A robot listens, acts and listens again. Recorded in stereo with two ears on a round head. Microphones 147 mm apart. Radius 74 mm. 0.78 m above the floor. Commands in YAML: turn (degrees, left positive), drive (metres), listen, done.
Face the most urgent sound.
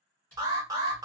turn: -20
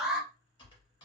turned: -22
done: "Found it: an alarm, straight ahead, under 1 m away."